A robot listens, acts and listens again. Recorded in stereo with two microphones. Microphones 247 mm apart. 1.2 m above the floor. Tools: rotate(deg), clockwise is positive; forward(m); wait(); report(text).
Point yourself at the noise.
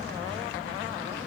wait()
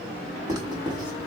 rotate(30)
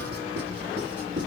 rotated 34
rotate(130)
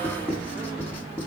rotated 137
report("Facing the writing.")